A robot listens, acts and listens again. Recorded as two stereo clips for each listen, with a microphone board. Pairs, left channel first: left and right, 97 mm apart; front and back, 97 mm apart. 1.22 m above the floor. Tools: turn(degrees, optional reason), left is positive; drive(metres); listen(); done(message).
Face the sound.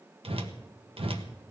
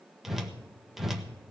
turn(degrees=-95, reason="The whoosh: 95° right.")
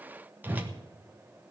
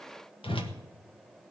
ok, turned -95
turn(degrees=-20, reason="The whoosh is now 20° right.")
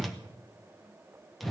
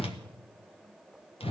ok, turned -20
done("Facing the whoosh.")